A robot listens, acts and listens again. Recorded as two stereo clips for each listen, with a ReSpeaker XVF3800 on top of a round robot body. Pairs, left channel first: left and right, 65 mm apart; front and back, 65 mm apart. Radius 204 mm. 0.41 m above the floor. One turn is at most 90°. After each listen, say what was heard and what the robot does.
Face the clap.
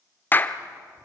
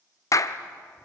The clap: 30° left. Turn 30° left.
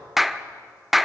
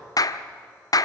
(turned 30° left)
Found it: a clap, straight ahead.